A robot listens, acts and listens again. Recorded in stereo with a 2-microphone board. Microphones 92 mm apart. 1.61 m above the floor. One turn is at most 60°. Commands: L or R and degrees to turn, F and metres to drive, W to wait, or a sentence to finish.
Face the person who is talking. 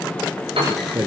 R35
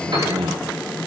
R60
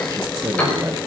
R40
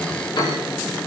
W
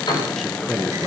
Facing the man speaking, 1 to 2 m away.